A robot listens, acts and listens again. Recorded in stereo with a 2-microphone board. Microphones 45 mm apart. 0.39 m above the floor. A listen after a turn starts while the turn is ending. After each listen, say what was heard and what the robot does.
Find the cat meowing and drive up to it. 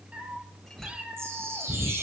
The cat meowing: about 25° right or 155° right. Turn 25° right.
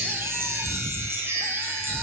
So it is at 130° right. Turn 130° right.
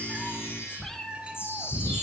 The cat meowing is now 10° left. Turn 10° left.
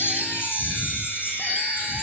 Drive 1.0 m forward.
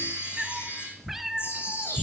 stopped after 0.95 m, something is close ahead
The cat meowing is now 10° right. Turn 10° right.
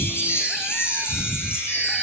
I am next to the cat meowing.